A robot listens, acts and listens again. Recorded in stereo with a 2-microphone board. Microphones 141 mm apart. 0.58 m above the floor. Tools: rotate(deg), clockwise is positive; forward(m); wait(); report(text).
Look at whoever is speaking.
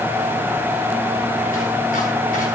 wait()
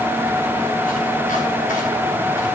wait()
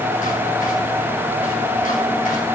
report("I can't make out anyone speaking.")